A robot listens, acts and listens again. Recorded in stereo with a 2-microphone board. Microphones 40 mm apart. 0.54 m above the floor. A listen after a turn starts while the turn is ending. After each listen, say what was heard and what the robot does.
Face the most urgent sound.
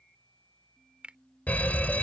The fire alarm: about 40° left or 140° left. Turn 40° left.
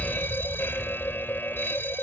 So it is at 90° left. Turn 90° left.
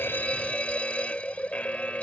The fire alarm is now 40° left. Turn 40° left.
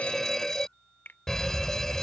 The fire alarm is now 15° left. Turn 15° left.
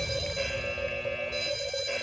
Facing the fire alarm.